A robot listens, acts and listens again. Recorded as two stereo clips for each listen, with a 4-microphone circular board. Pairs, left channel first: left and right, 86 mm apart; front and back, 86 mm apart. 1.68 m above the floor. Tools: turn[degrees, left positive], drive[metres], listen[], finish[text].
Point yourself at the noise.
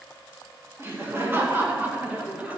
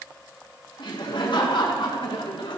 Thought: The laughter: 15° right.
Action: turn[-15]
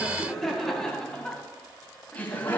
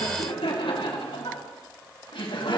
Thought: The laughter is now 25° left.
Action: turn[25]
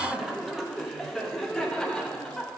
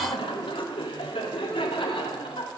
Action: finish[Facing the laughter.]